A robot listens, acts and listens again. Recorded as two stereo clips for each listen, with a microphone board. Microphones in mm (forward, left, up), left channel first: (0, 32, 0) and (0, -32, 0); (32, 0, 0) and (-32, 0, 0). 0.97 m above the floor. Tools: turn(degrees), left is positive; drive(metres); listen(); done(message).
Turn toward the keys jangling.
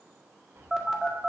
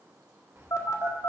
turn(degrees=-140)
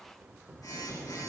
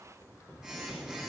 turn(degrees=-40)
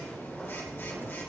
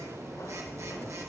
listen()
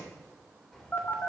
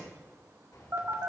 turn(degrees=10)
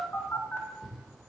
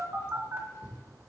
done("Facing the keys jangling, 2 to 4 m away.")